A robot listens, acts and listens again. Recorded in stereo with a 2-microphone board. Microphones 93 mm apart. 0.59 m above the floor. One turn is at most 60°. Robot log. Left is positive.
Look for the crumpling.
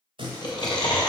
note: The crumpling: about 65° right or 115° right.
cmd yaw -60
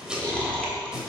note: So it is at 10° right.
cmd yaw -10
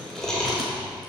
end: Facing the crumpling, 1 to 2 m away.